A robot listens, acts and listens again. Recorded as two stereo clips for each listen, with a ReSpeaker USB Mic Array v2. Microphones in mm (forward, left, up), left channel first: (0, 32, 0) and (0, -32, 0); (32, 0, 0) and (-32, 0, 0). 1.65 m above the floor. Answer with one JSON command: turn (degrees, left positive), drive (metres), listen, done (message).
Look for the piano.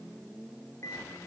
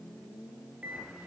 {"listen": true}
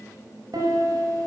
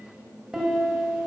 {"turn": -100}
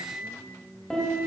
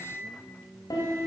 {"done": "Found it: a piano, straight ahead, over 4 m away."}